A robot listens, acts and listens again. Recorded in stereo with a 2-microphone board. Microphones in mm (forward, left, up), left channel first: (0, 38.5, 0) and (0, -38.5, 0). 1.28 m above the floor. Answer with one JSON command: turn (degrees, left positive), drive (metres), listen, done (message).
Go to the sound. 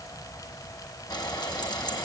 {"turn": 65}
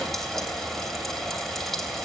{"drive": 1.0}
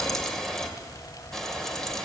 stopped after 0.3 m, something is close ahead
{"done": "Something is in my way. I am facing the frying but have not reached it."}